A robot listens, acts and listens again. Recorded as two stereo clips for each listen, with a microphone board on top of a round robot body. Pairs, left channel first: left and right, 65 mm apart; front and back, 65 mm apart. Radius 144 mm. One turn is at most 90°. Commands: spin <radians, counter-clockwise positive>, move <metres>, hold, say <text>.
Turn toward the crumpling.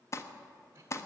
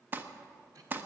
spin 1.57
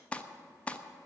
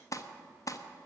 spin 0.35
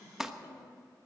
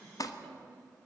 say Facing the crumpling.